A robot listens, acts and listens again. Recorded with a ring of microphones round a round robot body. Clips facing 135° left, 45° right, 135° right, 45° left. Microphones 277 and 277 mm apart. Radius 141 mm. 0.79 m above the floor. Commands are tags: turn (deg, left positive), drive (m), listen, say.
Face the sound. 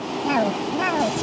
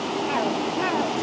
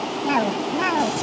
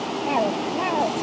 <turn deg="165"/>
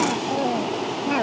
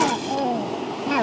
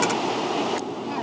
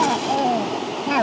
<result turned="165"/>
<turn deg="40"/>
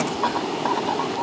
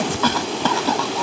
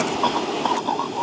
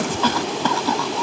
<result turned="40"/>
<say>Found it: a cough, straight ahead.</say>